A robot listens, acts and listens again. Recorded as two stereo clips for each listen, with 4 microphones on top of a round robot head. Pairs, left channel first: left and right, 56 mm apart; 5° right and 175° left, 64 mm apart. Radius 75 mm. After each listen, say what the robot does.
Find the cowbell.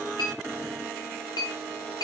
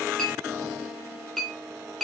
Keep listening.
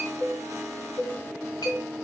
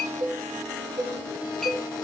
Turn 115° left.
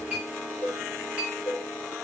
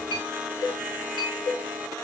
Turn 15° left.
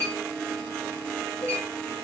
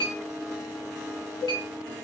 Found it: a cowbell, straight ahead.